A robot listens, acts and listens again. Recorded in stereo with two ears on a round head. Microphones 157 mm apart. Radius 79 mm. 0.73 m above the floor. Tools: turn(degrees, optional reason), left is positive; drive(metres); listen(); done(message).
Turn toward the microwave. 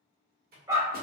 turn(degrees=-55, reason="The microwave: about 55° right or 125° right.")
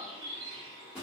done("Facing the microwave.")